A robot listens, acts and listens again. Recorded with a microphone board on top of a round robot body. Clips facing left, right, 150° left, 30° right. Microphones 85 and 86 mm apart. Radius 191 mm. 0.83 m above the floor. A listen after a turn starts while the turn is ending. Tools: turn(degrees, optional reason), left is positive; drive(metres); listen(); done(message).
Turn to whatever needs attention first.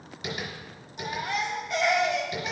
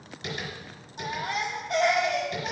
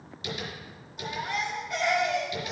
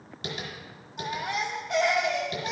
turn(degrees=-45, reason="The baby crying: 45° right.")
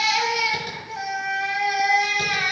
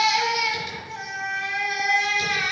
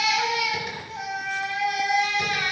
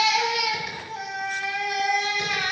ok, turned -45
turn(degrees=10, reason="The baby crying is now 10° left.")
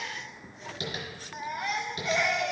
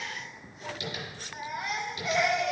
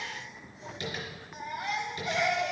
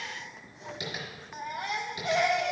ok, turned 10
done("Found it: a baby crying, straight ahead.")